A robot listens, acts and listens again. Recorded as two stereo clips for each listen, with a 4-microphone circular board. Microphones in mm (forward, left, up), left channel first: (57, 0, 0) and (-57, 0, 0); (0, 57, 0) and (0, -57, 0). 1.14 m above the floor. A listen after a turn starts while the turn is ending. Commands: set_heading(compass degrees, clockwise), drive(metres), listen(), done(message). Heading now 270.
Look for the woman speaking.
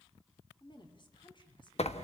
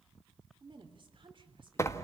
set_heading(315)
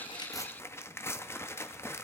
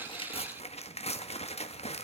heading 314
listen()
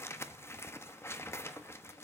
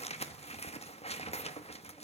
listen()
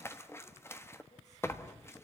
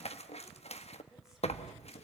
done("I heard a woman speaking from this way, but can't make it out now.")